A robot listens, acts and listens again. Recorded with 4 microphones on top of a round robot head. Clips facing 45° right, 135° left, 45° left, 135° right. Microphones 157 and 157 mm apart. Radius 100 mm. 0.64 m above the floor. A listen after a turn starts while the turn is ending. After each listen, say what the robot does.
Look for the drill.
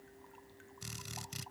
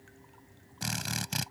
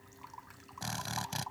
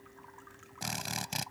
Turn 150° left.
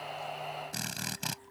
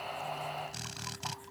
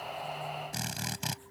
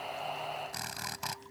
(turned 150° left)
Turn 20° right.
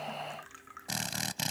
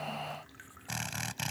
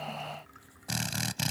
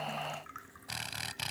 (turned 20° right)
Found it: a drill, straight ahead.